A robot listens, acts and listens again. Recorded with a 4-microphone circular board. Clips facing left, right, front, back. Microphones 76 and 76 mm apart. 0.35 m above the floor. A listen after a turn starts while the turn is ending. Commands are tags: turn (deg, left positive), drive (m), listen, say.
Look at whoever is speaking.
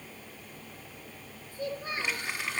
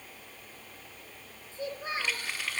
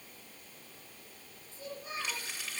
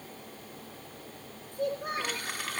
<turn deg="-160"/>
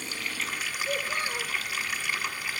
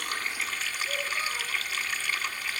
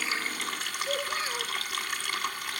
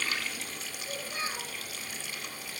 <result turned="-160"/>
<listen/>
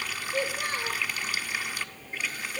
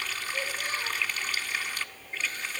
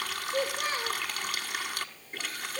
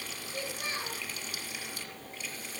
<turn deg="50"/>
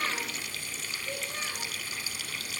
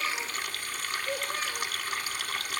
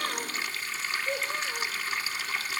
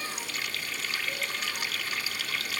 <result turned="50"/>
<turn deg="-15"/>
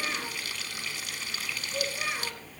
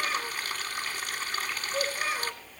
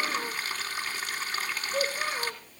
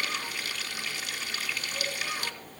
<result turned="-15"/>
<say>Found it: a child speaking, straight ahead, over 4 m away.</say>